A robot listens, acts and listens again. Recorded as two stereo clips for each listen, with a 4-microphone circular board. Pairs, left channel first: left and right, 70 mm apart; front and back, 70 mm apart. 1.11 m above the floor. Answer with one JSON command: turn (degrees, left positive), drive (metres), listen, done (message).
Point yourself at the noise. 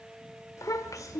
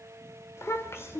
{"turn": 55}
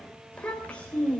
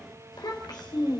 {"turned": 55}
{"turn": 20}
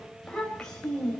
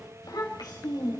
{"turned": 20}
{"turn": 10}
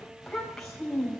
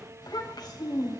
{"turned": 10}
{"done": "Found it: a child speaking, straight ahead."}